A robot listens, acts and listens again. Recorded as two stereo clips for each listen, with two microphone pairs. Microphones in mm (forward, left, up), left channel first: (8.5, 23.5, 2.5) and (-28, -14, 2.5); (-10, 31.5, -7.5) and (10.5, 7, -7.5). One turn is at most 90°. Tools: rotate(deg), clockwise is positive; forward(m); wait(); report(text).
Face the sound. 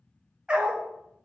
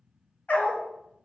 rotate(-90)
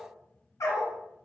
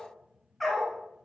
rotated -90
rotate(-45)
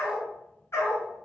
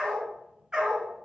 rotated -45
rotate(-15)
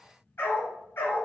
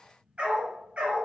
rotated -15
report("Found it: a dog barking, straight ahead, over 4 m away.")